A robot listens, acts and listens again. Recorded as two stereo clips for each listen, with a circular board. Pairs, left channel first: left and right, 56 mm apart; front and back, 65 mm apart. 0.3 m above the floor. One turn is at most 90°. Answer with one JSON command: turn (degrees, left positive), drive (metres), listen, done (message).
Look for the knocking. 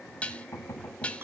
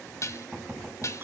{"turn": 90}
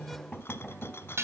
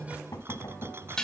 {"turn": 10}
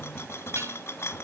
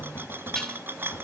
{"listen": true}
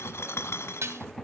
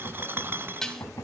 {"done": "Facing the knocking."}